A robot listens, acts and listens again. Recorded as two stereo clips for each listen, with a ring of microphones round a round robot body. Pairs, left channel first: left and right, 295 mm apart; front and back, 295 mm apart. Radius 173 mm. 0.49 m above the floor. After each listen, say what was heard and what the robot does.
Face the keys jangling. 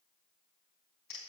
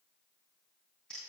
Keep listening.
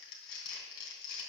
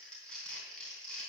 Keep listening.
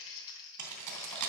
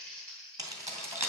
The keys jangling: 100° right. Turn 100° right.
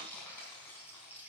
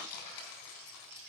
Facing the keys jangling.